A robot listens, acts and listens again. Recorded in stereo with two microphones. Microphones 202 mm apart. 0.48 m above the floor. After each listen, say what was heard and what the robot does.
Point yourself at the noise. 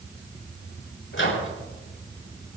Turn 90° left.
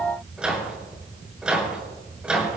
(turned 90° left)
Facing the microwave, over 4 m away.